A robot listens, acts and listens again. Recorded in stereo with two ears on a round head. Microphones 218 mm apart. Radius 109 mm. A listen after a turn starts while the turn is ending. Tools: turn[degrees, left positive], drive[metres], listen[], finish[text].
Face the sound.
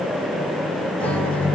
Action: turn[30]
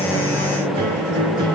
Thought: So it is at 25° right.
Action: turn[-25]
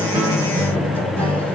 Thought: The guitar is now 10° left.
Action: turn[10]
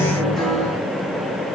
Action: finish[Found it: a guitar, straight ahead.]